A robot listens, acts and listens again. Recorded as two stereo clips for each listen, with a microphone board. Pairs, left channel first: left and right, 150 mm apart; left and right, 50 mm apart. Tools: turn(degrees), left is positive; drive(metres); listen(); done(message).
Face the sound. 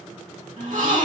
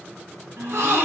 turn(degrees=-60)
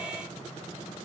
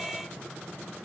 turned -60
listen()
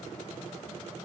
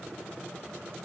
done("I heard a gasp, but can't make it out now. It was about straight ahead or 60° right.")